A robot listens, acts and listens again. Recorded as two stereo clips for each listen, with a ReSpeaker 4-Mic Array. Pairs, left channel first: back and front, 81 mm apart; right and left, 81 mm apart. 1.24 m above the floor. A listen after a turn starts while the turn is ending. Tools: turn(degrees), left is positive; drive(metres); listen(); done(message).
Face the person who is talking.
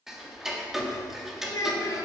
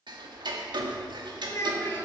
turn(degrees=-145)
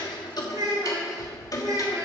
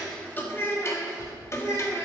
turn(degrees=-40)
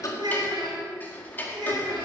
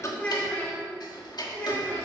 turn(degrees=-25)
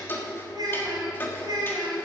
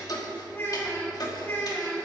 turn(degrees=-30)
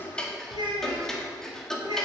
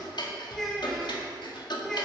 done("Found it: a child speaking, straight ahead.")